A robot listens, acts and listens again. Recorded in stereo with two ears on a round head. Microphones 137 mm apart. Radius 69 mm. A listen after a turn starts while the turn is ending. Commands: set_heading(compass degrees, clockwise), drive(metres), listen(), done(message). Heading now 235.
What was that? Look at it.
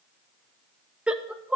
set_heading(265)
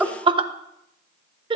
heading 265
set_heading(45)
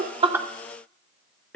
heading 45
set_heading(35)
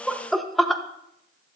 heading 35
done("Facing the laughter, 1 to 2 m away.")